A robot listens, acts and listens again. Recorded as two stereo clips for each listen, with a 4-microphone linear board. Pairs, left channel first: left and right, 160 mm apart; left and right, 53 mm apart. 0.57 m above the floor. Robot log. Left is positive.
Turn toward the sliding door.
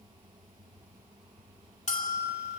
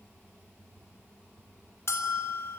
cmd idle
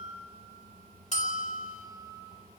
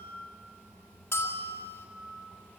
cmd idle
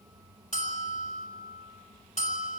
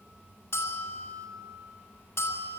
end: I can't make out a sliding door to turn to.